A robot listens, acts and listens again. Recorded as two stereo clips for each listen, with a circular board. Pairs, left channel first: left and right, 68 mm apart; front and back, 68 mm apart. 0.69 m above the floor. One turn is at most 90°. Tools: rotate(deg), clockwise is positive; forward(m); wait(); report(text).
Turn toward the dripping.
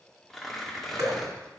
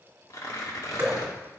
rotate(90)
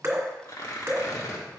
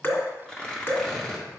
rotate(45)
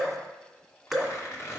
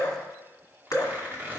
report("Found it: dripping, straight ahead, 2 to 4 m away.")